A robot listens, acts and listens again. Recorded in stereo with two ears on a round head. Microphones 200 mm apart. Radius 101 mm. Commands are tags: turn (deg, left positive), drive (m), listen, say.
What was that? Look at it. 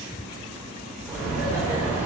<turn deg="-30"/>
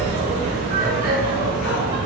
<turn deg="-135"/>
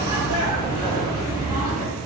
<turn deg="-40"/>
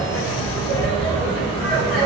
<say>Found it: laughter, straight ahead.</say>